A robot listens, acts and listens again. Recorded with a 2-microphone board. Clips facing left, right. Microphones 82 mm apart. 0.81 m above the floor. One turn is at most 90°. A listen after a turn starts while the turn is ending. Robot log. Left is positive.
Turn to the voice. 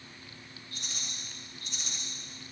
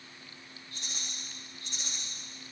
cmd idle
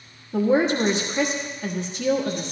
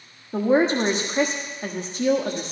note: The woman speaking: about 35° right or 145° right.
cmd yaw -35
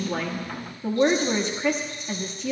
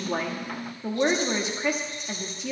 end: Facing the woman speaking.